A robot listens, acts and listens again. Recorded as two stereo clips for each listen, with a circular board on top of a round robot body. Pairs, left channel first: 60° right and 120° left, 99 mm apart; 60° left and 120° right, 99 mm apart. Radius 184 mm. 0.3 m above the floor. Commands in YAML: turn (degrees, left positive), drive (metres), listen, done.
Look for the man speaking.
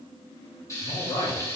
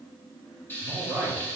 turn: -50
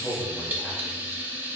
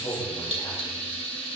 turn: 15
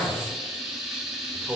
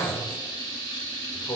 turn: 40
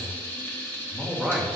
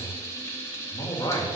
turn: 30
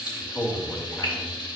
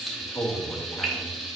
done: "Facing the man speaking."